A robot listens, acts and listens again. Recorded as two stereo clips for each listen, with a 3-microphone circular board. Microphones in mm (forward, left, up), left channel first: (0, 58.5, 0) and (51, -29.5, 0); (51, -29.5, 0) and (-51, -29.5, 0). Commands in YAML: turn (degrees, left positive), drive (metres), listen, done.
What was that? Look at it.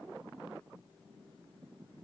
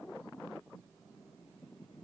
listen: true
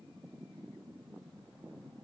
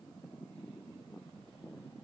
listen: true
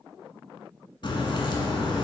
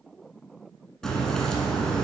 turn: 85
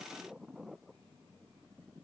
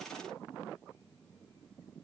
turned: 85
done: "Facing where the crack came from. I can't hear it now."